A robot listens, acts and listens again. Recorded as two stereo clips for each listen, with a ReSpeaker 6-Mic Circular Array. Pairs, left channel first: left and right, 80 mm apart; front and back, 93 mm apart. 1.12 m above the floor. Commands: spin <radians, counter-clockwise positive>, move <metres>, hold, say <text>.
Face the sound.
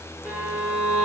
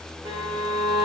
spin -2.88
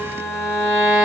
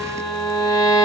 spin -0.26
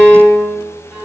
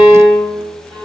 say Found it: a violin, straight ahead.